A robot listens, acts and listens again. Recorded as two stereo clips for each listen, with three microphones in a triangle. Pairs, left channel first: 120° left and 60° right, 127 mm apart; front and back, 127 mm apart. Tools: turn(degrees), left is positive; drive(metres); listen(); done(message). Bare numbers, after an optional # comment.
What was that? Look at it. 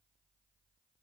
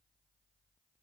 listen()
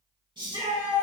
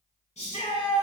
# The shout: 15° right.
turn(-15)
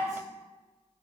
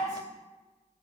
listen()
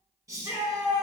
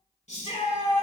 done("Facing the shout.")